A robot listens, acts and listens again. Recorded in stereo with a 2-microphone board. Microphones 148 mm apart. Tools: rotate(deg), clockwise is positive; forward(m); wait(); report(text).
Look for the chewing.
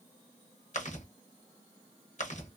rotate(-55)
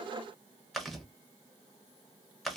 report("Found it: chewing, straight ahead.")